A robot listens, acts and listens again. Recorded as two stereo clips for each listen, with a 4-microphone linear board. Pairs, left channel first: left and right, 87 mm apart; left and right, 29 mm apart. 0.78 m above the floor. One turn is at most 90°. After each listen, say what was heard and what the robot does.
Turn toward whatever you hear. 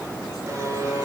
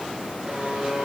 The buzzer: about 35° right or 145° right. Turn 35° right.
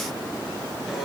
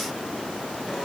Found it: a buzzer, straight ahead.